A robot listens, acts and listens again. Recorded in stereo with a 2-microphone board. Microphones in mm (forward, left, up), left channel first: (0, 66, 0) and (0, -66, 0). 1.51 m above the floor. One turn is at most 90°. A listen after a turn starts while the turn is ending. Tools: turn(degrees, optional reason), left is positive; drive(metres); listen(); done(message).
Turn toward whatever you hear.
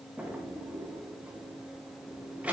turn(degrees=-30)
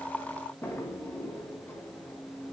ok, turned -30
turn(degrees=20, reason="So it is at 20° left.")
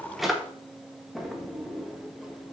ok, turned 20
done("Facing the drawer, 1 to 2 m away.")